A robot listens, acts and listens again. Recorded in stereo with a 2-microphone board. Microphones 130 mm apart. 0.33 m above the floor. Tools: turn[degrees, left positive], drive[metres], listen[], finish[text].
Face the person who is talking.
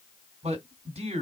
Thought: The man speaking: about 55° right or 125° right.
Action: turn[-55]
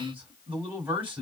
Thought: So it is at 15° right.
Action: turn[-15]
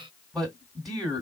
Action: finish[Facing the man speaking.]